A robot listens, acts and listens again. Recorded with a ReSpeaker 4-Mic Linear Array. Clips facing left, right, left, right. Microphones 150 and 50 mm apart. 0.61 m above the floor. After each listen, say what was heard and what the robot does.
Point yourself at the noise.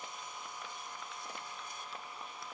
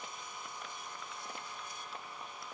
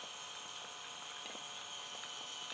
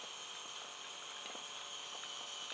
Keep listening.
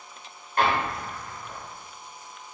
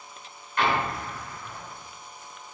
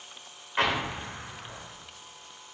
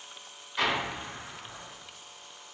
The explosion: about 40° left or 140° left. Turn 40° left.
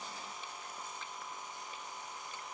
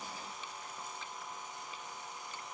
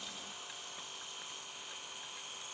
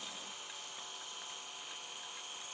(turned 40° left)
Keep listening.
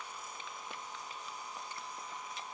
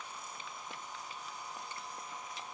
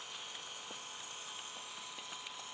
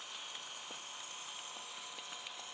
I heard an explosion, but can't make it out now. It was about straight ahead or 100° left.